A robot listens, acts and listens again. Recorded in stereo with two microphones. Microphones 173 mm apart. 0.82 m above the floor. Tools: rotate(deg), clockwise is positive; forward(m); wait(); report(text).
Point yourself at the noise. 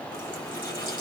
rotate(-25)
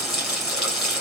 report("Facing the running tap.")